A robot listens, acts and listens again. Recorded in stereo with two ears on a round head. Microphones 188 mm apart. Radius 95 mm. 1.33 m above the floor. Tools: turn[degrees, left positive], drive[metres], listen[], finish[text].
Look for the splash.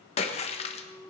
Thought: The splash: about 30° left or 150° left.
Action: turn[30]
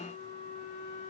Action: listen[]
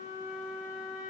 Action: finish[I heard a splash, but can't make it out now. It was about straight ahead or 120° left.]